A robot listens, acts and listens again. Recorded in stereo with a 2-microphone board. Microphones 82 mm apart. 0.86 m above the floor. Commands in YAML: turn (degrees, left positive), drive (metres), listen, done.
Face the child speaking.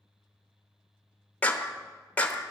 listen: true
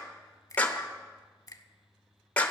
listen: true
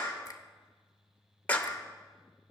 done: "I can't make out a child speaking, only a finger snap and a clap."